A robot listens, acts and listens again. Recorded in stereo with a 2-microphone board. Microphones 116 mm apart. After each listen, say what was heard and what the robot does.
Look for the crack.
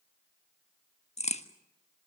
The crack: about 65° left or 115° left. Turn 65° left.
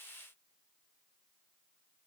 Keep listening.
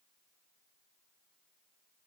I heard a crack, but can't make it out now. It was about straight ahead or 50° left.